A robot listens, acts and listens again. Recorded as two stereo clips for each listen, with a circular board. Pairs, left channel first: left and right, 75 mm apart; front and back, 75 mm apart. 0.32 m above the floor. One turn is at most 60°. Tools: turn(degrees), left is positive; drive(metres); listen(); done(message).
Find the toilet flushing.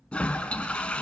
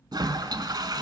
turn(degrees=60)
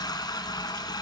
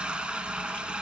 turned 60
turn(degrees=60)
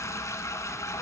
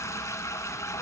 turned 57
turn(degrees=45)
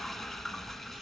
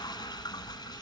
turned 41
done("Facing the toilet flushing.")